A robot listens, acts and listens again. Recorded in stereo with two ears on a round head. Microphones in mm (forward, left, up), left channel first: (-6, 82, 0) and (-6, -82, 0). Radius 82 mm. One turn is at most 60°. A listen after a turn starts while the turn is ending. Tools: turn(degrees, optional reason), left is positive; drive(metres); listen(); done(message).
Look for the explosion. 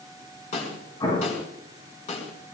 turn(degrees=20, reason="The explosion: about 20° left or 160° left.")
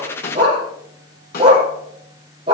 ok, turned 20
listen()
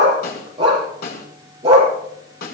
done("I heard an explosion, but can't make it out now. It was about straight ahead or 140° left.")